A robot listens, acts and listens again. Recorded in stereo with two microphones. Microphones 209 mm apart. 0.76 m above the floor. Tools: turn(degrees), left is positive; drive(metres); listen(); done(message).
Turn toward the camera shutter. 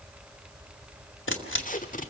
turn(degrees=70)
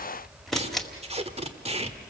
done("Found it: a camera shutter, straight ahead, 2 to 4 m away.")